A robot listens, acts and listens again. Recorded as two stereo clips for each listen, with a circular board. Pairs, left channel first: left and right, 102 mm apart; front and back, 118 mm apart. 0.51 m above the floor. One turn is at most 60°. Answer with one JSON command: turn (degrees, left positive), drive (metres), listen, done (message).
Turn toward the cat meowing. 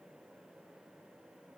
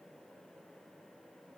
{"listen": true}
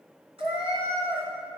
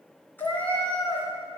{"turn": -60}
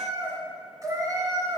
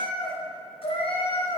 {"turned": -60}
{"turn": -40}
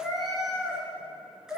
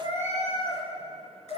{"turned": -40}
{"done": "Found it: a cat meowing, straight ahead."}